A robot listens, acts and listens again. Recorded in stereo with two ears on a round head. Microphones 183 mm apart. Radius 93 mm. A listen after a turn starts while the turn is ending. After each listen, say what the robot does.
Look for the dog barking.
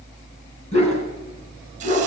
Turn 35° left.
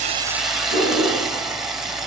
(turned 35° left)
Turn 110° left.
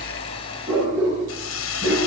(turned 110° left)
Found it: a dog barking, straight ahead, over 4 m away.